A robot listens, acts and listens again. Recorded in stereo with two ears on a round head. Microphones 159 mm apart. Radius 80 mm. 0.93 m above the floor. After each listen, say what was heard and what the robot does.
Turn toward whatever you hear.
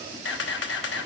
The camera shutter: about 70° left or 110° left. Turn 70° left.
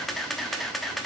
Found it: a camera shutter, straight ahead, 1 to 2 m away.